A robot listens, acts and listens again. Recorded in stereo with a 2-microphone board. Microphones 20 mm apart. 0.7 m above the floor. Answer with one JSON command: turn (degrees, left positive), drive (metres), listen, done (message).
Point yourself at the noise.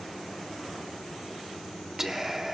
{"turn": -25}
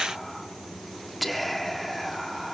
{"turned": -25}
{"done": "Found it: whispering, straight ahead, 1 to 2 m away."}